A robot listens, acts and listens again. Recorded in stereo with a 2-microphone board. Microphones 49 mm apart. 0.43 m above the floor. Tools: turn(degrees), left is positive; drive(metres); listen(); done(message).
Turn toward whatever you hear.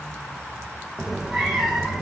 turn(degrees=-30)
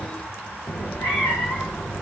turn(degrees=35)
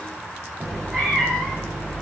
turn(degrees=10)
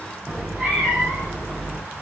done("Facing the cat meowing, over 4 m away.")